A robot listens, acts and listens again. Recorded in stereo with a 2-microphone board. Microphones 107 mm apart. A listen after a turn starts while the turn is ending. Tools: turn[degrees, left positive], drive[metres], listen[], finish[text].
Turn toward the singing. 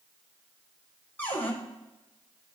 Action: listen[]
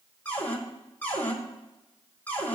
Action: listen[]
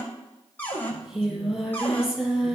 Action: turn[-30]
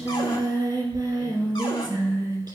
Thought: So it is at 135° right.
Action: turn[-135]
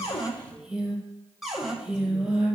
Action: finish[Found it: singing, straight ahead.]